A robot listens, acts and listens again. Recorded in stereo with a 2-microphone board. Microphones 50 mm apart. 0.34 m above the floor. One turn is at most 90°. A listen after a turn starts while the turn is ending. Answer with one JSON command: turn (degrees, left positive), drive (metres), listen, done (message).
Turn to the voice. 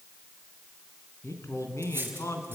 {"turn": 70}
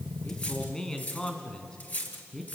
{"turn": 15}
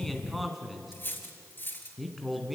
{"done": "Found it: a man speaking, straight ahead."}